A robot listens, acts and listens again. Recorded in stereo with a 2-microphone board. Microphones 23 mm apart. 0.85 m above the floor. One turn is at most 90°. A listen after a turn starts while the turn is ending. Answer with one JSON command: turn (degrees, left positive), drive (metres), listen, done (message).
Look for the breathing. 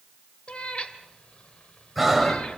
{"turn": 30}
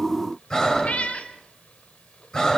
{"turn": 90}
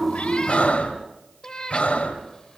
{"turn": 80}
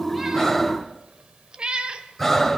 {"done": "Found it: breathing, straight ahead, 2 to 4 m away."}